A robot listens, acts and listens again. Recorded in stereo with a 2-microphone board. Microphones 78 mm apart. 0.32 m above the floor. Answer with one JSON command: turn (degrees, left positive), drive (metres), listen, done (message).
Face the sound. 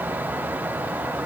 {"listen": true}
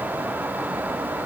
{"listen": true}
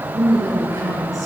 {"turn": -45}
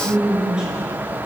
{"turn": -10}
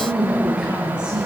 {"turn": -15}
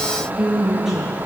{"done": "Facing the woman speaking, over 4 m away."}